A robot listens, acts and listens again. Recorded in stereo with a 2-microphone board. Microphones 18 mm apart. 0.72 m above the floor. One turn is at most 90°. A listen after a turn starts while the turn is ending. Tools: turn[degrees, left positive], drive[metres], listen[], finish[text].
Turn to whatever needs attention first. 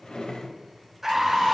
Thought: The scream: about 15° right or 165° right.
Action: turn[-15]
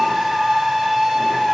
Thought: So it is at 150° right.
Action: turn[-90]
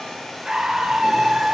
Thought: The scream is now 55° right.
Action: turn[-55]
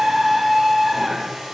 Action: finish[Facing the scream, under 1 m away.]